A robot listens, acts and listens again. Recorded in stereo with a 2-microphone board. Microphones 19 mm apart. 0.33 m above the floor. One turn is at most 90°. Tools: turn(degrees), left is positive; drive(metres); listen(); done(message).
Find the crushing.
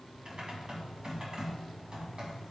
listen()
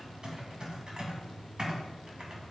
listen()
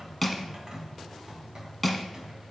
turn(degrees=30)
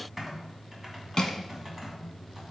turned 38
turn(degrees=90)
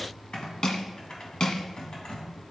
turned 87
turn(degrees=55)
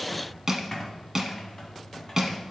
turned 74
turn(degrees=-20)
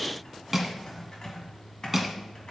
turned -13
turn(degrees=-10)
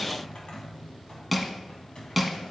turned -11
done("Found it: crushing, straight ahead.")